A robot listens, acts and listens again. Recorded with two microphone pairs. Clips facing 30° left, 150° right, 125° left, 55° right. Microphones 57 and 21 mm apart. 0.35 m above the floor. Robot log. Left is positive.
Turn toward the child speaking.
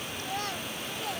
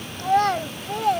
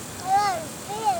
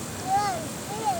note: The child speaking: 165° right.
cmd yaw -165
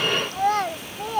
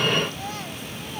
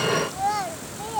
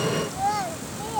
note: The child speaking is now 40° left.
cmd yaw +40
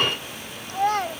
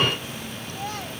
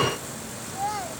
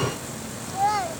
end: Facing the child speaking.